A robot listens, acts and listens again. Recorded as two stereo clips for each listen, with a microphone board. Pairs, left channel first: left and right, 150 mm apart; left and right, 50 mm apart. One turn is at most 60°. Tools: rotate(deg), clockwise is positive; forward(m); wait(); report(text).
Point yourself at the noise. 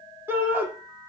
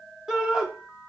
rotate(30)
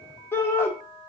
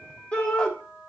rotate(-15)
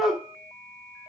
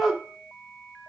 report("Facing the shout.")